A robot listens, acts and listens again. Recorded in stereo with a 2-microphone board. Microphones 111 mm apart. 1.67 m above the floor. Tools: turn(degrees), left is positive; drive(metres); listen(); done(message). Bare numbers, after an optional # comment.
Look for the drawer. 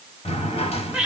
# The drawer: about 60° left or 120° left.
turn(60)
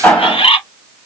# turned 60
# So it is at 10° left.
turn(10)
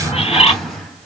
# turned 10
done("Facing the drawer.")